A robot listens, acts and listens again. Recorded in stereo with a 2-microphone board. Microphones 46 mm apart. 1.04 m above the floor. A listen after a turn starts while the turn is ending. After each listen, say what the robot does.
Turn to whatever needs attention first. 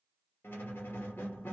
Keep listening.
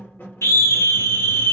Turn 70° left.
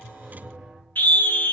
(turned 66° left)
Turn 40° left.
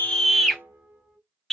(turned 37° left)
Facing the scream, under 1 m away.